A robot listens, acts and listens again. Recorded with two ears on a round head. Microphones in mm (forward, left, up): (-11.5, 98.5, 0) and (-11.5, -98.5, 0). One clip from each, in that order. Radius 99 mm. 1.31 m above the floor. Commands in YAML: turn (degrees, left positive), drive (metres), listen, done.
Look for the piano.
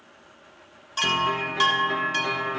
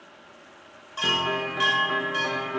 turn: 25
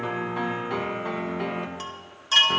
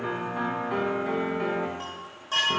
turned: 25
turn: 130
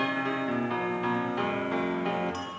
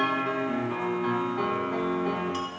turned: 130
turn: 45
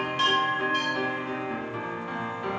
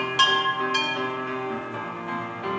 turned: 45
done: "Facing the piano, 1 to 2 m away."